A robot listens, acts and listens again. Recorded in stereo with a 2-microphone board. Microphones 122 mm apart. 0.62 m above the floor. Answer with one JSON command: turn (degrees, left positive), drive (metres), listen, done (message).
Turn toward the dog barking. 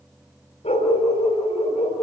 {"turn": 65}
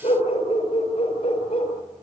{"turn": 50}
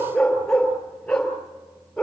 {"done": "Found it: a dog barking, straight ahead."}